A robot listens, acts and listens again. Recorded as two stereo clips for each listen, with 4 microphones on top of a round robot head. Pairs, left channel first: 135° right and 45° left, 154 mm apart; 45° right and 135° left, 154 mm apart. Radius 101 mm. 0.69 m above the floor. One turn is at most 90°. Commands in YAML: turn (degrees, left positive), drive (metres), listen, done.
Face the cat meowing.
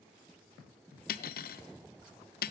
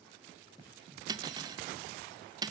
listen: true
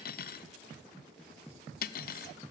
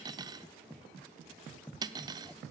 listen: true
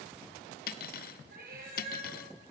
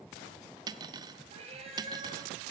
turn: 80
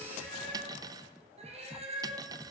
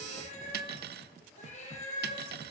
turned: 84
done: "Facing the cat meowing, over 4 m away."